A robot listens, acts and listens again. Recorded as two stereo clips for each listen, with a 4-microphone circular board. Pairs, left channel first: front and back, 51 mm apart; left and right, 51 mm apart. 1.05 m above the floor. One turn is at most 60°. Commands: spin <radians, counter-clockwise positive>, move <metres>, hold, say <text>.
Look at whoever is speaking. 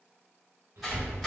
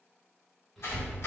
spin 1.05
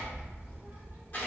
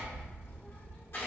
spin 1.05
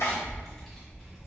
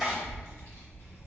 spin 1.05
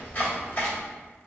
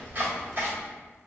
spin 0.70
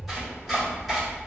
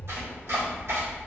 say Found it: a child speaking, straight ahead, 1 to 2 m away.